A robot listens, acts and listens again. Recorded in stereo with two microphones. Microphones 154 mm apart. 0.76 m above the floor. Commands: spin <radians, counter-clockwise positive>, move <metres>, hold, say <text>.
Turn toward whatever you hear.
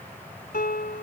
spin 1.57
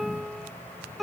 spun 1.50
say Found it: a piano, straight ahead.